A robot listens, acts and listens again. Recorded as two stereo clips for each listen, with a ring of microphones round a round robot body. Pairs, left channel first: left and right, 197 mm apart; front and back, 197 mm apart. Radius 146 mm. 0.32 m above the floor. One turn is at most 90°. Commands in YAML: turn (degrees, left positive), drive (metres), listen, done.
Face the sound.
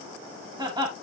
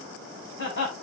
turn: -25
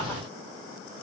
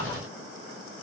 listen: true
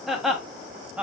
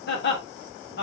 done: "Facing the laughter."